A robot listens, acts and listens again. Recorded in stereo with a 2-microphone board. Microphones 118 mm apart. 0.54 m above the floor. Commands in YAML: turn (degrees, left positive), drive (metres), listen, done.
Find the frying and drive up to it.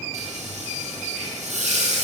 turn: -90
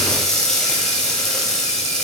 drive: 1.0
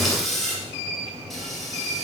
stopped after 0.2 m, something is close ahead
done: "Something is in my way. I am facing the frying but have not reached it."